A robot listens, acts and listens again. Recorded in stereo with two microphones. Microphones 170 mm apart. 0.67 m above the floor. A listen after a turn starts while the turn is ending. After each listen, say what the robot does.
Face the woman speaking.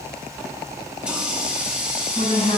Turn 50° left.
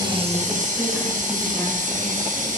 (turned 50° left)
Keep listening.
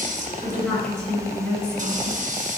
Turn 10° left.
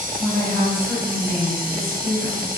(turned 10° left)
Facing the woman speaking.